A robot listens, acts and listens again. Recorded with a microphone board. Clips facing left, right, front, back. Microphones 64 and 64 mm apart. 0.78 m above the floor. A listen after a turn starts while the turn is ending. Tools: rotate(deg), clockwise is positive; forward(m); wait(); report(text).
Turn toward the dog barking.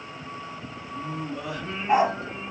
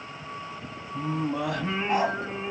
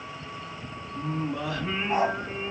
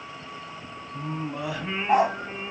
rotate(-160)
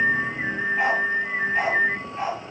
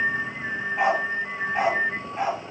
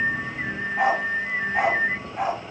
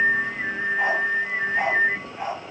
rotate(20)
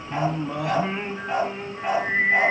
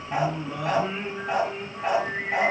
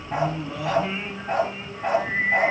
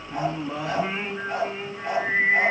report("Facing the dog barking, over 4 m away.")